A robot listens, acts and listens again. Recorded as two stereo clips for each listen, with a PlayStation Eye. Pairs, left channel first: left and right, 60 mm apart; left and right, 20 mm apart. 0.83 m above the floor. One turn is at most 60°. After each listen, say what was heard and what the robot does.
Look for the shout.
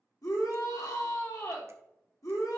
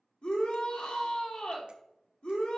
The shout: about 70° left or 110° left. Turn 60° left.
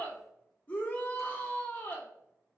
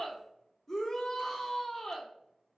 So it is at 30° left. Turn 30° left.
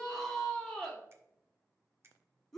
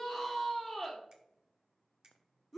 The shout is now 10° left. Turn 10° left.
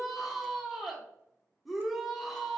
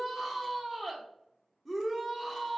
Facing the shout.